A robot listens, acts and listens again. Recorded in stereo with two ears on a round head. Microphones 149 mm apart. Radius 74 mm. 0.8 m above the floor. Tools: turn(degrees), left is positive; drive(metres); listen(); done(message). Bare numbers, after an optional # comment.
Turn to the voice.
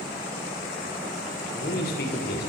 # The man speaking: about 65° left or 115° left.
turn(65)
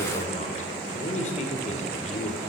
# So it is at 45° left.
turn(45)
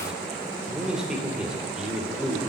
done("Facing the man speaking.")